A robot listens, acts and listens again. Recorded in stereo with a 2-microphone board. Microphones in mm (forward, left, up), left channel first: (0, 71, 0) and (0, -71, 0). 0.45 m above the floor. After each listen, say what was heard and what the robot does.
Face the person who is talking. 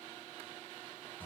Keep listening.
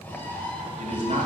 The man speaking: about 60° right or 120° right. Turn 60° right.
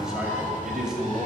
Facing the man speaking.